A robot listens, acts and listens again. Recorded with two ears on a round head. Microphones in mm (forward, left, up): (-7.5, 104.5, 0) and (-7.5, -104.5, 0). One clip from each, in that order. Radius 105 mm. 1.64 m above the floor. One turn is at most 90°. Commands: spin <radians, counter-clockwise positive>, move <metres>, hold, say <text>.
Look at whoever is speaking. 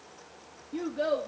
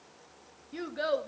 spin -0.96
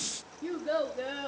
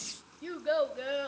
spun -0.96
spin -1.13
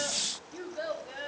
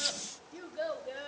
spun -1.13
say Found it: a child speaking, straight ahead, 2 to 4 m away.